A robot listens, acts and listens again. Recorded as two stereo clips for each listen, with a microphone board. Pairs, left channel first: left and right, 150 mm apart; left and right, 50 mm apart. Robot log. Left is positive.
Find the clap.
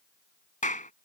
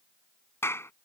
note: The clap: about 60° left or 120° left.
cmd yaw +60
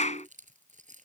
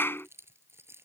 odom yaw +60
note: So it is at 55° left.
cmd yaw +55
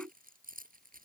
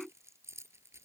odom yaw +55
cmd idle
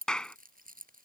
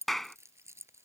end: Facing the clap.